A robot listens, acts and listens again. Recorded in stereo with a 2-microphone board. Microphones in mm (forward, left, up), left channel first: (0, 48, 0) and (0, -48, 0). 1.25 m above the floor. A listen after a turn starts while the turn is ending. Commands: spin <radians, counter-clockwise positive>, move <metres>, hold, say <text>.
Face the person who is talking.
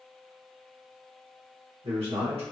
spin -1.57
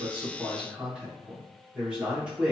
spin -0.17
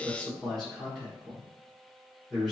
say Facing the man speaking.